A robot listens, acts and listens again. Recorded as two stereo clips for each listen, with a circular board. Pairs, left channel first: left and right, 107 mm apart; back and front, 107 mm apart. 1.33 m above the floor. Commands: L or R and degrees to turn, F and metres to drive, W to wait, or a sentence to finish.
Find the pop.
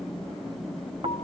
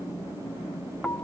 W
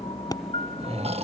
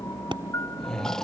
L40
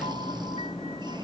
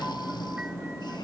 I heard a pop from this way, but can't make it out now.